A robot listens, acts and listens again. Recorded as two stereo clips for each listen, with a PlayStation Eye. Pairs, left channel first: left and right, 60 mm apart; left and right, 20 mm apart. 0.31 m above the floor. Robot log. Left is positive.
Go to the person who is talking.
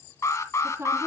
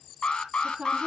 note: The woman speaking: about 45° right or 135° right.
cmd yaw -45
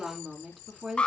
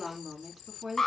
cmd fwd 1.0
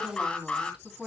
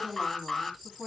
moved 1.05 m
note: The woman speaking is now 10° right.
cmd yaw -10
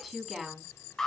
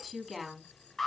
cmd fwd 1.0
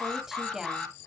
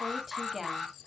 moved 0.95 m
note: The woman speaking is now 10° right.
cmd yaw -10
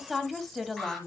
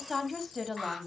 cmd fwd 1.0
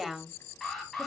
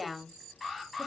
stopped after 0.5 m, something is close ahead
end: I am next to the woman speaking.